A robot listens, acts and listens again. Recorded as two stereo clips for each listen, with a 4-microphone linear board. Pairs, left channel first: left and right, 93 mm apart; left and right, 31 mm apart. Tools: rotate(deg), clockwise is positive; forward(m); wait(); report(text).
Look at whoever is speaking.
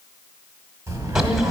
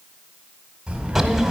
rotate(30)
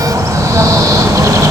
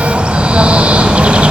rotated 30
wait()
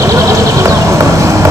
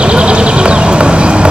wait()
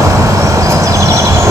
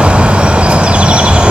report("I heard a child speaking, but can't make it out now. It was about straight ahead or 120° right.")